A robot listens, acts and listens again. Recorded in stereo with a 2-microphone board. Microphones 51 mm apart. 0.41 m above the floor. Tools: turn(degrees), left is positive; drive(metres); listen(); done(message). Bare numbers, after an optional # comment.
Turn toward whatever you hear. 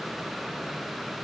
listen()
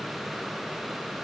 listen()
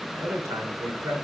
# The man speaking: about 70° right or 110° right.
turn(-70)
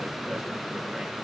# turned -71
listen()
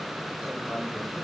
listen()
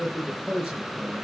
done("Facing the man speaking, over 4 m away.")